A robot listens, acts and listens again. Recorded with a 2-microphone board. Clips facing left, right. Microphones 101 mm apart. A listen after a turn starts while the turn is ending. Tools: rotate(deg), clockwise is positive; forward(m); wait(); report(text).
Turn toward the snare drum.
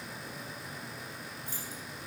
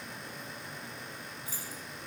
wait()
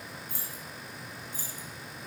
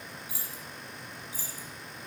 wait()
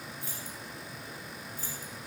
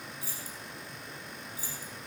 report("I can't make out a snare drum, only keys jangling.")